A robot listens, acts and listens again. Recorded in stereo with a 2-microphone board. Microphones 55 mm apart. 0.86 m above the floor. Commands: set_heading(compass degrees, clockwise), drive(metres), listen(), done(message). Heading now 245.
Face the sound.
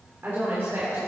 set_heading(285)
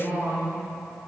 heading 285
set_heading(30)
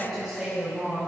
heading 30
done("Facing the woman speaking, over 4 m away.")